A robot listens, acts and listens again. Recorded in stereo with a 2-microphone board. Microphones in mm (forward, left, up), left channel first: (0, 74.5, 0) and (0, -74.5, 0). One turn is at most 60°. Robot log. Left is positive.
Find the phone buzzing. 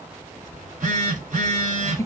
note: The phone buzzing: about 60° right or 120° right.
cmd yaw -60
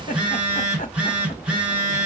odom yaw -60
note: So it is at 10° right.
cmd yaw -10
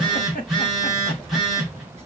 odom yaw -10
end: Facing the phone buzzing.